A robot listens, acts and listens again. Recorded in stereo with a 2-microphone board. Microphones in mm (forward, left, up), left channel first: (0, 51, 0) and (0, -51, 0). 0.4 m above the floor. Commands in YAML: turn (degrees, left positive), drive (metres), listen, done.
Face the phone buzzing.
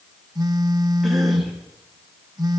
turn: -40
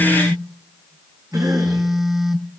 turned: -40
done: "Found it: a phone buzzing, straight ahead."